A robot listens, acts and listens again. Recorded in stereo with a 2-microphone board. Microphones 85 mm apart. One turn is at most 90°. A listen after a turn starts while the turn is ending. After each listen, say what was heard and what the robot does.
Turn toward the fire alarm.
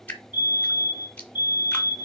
The fire alarm: about 20° right or 160° right. Turn 20° right.
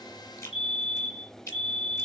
Found it: a fire alarm, straight ahead.